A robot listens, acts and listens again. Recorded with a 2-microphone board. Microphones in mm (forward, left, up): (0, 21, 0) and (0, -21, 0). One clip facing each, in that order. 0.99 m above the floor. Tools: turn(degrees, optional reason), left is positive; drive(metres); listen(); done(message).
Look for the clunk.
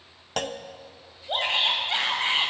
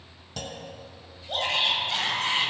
turn(degrees=60, reason="The clunk: about 60° left or 120° left.")
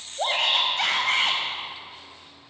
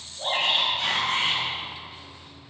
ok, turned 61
listen()
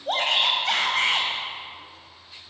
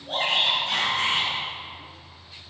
done("I heard a clunk, but can't make it out now. It was about straight ahead or 60° left.")